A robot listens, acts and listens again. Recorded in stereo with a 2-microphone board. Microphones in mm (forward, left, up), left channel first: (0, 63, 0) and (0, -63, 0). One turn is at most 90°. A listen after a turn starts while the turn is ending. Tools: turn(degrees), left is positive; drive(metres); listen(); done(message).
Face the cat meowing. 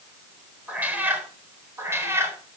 turn(degrees=-20)
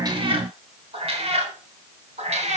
turn(degrees=-90)
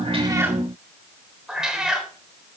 done("Found it: a cat meowing, straight ahead, 2 to 4 m away.")